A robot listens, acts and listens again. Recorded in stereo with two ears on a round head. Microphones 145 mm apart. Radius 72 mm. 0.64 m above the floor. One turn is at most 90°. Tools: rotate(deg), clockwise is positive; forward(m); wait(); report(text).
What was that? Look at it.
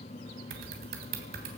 rotate(65)
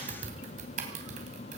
rotate(50)
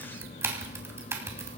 rotate(15)
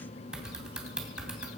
report("Found it: typing on a keyboard, straight ahead, 2 to 4 m away.")